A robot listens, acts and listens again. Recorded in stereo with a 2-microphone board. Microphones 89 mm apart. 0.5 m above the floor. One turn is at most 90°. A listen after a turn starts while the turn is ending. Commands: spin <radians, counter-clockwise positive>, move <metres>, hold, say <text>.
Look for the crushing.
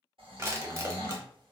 spin -0.52
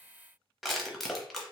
say Facing the crushing, under 1 m away.